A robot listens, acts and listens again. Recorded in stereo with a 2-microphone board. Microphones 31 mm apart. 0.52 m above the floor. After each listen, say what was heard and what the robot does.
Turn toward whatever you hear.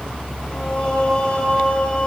The singing: about 40° left or 140° left. Turn 40° left.
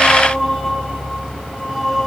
So it is at 10° left. Turn 10° left.
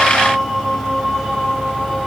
Found it: singing, straight ahead, over 4 m away.